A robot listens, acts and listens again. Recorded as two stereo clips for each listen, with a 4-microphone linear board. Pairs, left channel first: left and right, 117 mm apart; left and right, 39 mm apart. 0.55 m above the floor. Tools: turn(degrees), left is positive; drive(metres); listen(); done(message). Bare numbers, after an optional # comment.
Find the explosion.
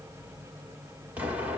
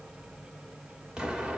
turn(-30)
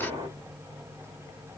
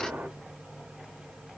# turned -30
# So it is at 135° right.
turn(-135)
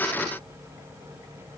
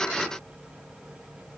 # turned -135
done("I heard an explosion from this way, but can't make it out now.")